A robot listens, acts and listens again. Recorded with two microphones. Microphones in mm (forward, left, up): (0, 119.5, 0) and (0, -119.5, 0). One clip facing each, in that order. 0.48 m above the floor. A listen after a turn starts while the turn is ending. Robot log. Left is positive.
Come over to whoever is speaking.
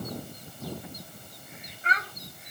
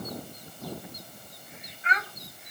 note: The child speaking: about 40° left or 140° left.
cmd yaw +40
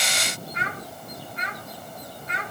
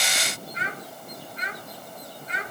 note: So it is at 95° left.
cmd yaw +95
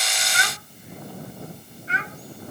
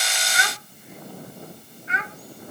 note: The child speaking is now 35° left.
cmd yaw +35
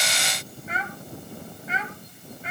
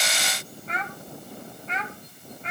cmd fwd 1.0
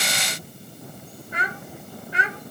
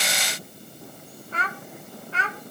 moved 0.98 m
note: The child speaking is now 15° left.
cmd yaw +15
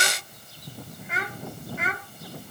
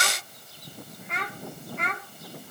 cmd fwd 1.0
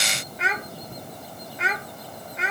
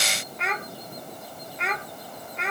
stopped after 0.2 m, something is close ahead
end: Arrived at the child speaking, straight ahead.